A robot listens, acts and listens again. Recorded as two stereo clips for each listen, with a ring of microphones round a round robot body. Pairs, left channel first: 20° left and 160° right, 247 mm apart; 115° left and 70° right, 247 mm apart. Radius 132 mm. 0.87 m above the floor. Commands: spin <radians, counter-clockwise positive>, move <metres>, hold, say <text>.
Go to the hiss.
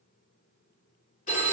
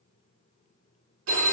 hold
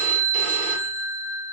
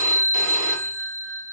hold
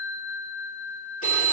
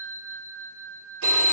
say I can't make out a hiss to turn to.